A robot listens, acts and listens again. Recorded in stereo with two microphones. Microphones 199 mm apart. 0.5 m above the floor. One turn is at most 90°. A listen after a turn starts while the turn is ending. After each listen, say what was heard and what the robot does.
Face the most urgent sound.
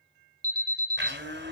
The alarm: about 50° right or 130° right. Turn 50° right.
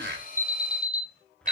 Found it: an alarm, straight ahead.